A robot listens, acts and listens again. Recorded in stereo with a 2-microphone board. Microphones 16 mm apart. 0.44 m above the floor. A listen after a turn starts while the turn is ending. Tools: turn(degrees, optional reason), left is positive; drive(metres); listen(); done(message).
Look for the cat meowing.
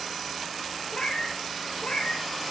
turn(degrees=75, reason="The cat meowing: about 75° left or 105° left.")
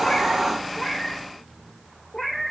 turn(degrees=15, reason="So it is at 15° left.")
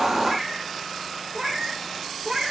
turn(degrees=-20, reason="The cat meowing is now 20° right.")
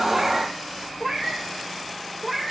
done("Found it: a cat meowing, straight ahead.")